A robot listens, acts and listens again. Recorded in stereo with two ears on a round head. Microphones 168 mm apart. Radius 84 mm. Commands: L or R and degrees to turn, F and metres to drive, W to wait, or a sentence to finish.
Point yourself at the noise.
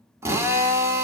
R30
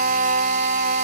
R135
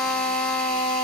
Facing the drill.